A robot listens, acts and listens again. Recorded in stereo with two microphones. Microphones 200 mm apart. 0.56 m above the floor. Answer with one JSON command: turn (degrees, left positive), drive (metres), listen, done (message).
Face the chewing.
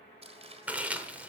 {"turn": -30}
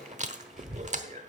{"turn": -140}
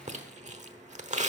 {"turn": -40}
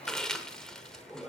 {"done": "Found it: chewing, straight ahead."}